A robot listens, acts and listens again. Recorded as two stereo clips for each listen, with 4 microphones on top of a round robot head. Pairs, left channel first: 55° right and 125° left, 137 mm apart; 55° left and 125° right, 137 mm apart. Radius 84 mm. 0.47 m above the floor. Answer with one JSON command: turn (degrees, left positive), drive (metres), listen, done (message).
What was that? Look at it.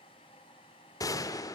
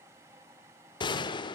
{"done": "Facing the gunshot."}